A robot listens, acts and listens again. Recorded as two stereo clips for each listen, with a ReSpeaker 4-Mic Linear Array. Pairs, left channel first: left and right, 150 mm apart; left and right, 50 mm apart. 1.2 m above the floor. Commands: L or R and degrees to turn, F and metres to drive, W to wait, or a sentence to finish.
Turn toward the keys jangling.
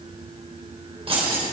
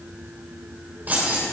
R40
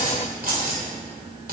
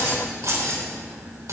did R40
R95
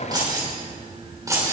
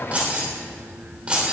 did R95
R20
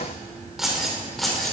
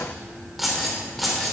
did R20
Facing the keys jangling.